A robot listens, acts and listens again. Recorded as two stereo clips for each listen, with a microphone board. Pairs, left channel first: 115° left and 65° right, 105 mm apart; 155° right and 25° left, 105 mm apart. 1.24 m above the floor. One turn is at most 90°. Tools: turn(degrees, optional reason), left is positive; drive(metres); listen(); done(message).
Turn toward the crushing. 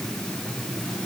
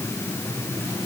listen()
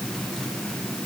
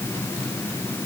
listen()
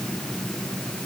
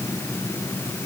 done("I can't make out crushing to turn to.")